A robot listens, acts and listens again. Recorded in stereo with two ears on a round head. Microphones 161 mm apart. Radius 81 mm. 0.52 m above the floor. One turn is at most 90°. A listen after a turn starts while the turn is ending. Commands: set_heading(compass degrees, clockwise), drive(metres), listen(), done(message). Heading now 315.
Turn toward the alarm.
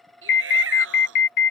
set_heading(265)
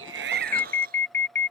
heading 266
set_heading(251)
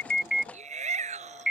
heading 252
done("Found it: an alarm, straight ahead.")